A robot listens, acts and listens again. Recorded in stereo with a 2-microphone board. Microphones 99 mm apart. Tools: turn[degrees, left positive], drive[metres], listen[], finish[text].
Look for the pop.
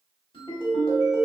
Action: listen[]
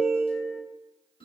Action: listen[]
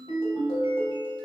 Action: finish[I can't make out a pop to turn to.]